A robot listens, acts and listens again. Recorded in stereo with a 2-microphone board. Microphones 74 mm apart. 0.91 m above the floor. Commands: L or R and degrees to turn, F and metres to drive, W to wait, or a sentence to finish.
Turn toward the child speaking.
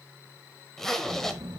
R75
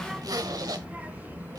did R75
R25
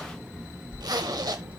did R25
R30
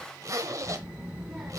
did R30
R15
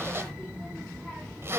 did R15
Found it: a child speaking, straight ahead, 1 to 2 m away.